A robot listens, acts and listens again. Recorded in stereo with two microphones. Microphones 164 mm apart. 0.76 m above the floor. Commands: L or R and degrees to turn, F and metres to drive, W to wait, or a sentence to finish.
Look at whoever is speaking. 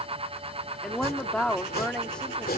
L30
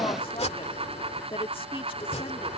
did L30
L145
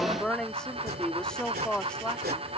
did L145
Found it: a woman speaking, straight ahead.